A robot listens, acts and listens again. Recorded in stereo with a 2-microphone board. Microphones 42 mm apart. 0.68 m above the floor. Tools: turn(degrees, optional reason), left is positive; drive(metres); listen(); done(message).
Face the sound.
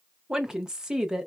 turn(degrees=-30)
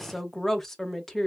turn(degrees=15, reason="So it is at 15° left.")
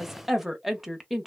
done("Found it: a woman speaking, straight ahead.")